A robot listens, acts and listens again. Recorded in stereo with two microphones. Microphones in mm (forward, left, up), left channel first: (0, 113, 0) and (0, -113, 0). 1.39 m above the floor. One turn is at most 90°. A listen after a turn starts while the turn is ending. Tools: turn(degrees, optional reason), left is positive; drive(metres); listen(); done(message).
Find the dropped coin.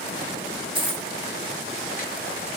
turn(degrees=-20, reason="The dropped coin: about 20° right or 160° right.")
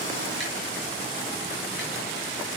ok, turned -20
listen()
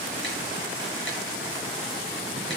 done("I heard a dropped coin, but can't make it out now. It was about straight ahead or 140° right.")